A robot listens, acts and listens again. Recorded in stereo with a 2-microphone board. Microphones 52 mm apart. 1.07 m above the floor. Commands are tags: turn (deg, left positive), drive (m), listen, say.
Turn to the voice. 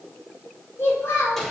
<turn deg="55"/>
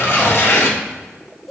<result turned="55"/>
<say>Facing the child speaking, 2 to 4 m away.</say>